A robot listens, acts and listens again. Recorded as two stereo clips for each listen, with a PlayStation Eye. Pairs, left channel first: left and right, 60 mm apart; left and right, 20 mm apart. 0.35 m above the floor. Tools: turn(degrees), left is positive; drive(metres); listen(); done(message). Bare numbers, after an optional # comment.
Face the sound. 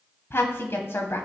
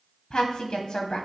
# The woman speaking: about 45° left or 135° left.
turn(45)
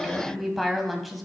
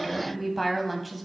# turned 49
done("Facing the woman speaking, 2 to 4 m away.")